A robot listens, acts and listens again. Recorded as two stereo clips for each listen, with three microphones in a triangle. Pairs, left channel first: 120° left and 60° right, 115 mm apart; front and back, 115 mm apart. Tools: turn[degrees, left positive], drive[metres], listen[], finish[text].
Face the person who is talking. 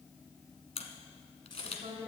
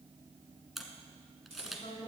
Thought: The woman speaking: 30° right.
Action: turn[-30]
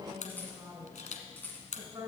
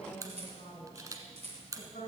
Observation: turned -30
Action: finish[Found it: a woman speaking, straight ahead, 2 to 4 m away.]